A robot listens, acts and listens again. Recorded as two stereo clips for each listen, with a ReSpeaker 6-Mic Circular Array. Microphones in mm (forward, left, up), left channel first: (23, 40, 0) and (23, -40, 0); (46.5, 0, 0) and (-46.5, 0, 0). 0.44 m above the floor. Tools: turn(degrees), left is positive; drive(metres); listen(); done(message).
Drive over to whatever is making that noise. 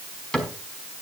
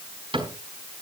turn(degrees=170)
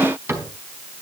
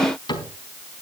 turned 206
turn(degrees=-35)
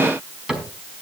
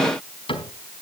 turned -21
turn(degrees=-10)
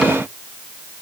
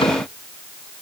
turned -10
listen()
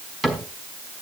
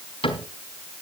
drive(metres=1.0)
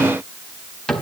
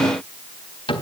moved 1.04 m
turn(degrees=10)
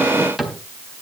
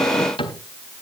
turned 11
drive(metres=1.0)
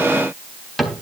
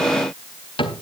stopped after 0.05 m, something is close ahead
done("Blocked. The cupboard door is further on, straight ahead.")